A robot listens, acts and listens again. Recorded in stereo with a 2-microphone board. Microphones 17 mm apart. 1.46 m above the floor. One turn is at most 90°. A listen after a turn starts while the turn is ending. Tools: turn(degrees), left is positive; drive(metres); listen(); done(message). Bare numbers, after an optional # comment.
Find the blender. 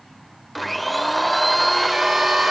turn(30)
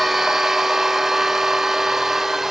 # So it is at 25° right.
turn(-25)
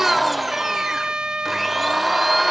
done("Facing the blender.")